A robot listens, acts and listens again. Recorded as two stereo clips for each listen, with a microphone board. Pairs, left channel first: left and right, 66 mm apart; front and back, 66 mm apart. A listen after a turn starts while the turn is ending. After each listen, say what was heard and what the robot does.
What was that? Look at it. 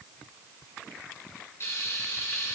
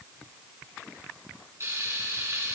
The frying: 135° left. Turn 135° left.
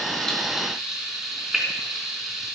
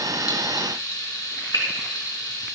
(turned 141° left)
Found it: frying, straight ahead, 2 to 4 m away.